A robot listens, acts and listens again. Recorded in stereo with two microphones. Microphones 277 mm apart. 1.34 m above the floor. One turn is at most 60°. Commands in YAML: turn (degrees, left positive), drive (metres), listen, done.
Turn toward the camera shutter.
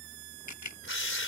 turn: 60
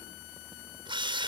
listen: true
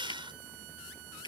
turn: 15
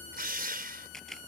done: "Facing the camera shutter."